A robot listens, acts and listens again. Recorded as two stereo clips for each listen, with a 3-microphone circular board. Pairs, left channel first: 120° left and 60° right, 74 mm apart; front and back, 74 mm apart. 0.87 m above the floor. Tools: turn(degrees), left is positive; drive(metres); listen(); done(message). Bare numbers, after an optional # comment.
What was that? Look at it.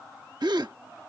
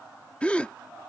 # The gasp: 75° right.
turn(-75)
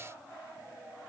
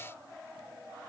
done("Facing where the gasp came from. I can't hear it now.")